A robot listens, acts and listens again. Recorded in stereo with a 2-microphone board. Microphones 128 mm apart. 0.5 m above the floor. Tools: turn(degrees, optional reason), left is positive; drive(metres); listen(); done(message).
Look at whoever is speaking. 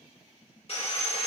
listen()
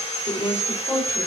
turn(degrees=20, reason="The woman speaking: about 20° left or 160° left.")
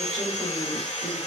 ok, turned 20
listen()
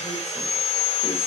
listen()
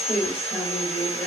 done("Facing the woman speaking.")